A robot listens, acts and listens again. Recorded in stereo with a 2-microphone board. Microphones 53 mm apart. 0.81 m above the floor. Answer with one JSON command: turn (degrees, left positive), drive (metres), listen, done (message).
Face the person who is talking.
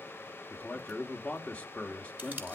{"turn": 25}
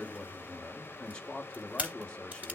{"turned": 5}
{"turn": 20}
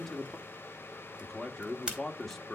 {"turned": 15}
{"done": "Facing the man speaking, 1 to 2 m away."}